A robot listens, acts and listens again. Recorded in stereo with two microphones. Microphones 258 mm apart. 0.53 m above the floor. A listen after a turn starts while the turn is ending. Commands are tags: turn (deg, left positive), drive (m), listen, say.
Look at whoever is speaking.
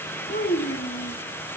<turn deg="40"/>
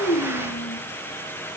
<listen/>
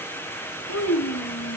<turn deg="100"/>
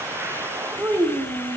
<turn deg="-10"/>
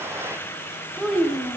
<say>Facing the child speaking.</say>